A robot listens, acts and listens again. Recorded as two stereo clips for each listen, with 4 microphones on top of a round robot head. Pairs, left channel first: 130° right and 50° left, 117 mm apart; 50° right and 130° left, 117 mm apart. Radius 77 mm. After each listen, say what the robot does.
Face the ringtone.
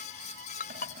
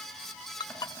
Turn 110° right.
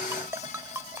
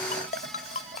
Turn 20° right.
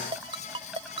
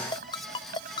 Facing the ringtone.